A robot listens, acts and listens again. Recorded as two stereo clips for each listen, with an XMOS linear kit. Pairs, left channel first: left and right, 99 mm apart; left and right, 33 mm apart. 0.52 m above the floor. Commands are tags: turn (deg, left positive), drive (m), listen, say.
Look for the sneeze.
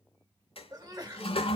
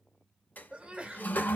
<turn deg="-40"/>
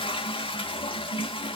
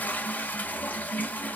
<listen/>
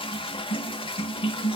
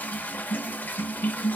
<say>I heard a sneeze, but can't make it out now. It was about straight ahead or 100° right.</say>